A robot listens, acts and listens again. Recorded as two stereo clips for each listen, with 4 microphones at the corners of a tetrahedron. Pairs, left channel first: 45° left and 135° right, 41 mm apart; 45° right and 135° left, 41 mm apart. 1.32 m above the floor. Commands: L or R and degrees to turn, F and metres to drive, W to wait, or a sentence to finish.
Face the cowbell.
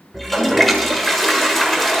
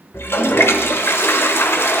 W
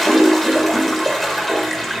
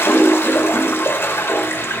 W
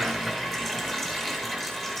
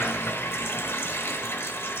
I can't make out a cowbell to turn to.